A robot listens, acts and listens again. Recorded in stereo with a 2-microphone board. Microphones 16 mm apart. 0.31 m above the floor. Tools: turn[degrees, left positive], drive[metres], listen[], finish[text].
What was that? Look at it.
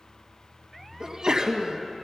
Thought: The sneeze: about 50° right or 130° right.
Action: turn[-50]
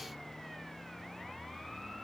Action: listen[]
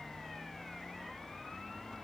Action: finish[I heard a sneeze, but can't make it out now. It was about straight ahead or 80° right.]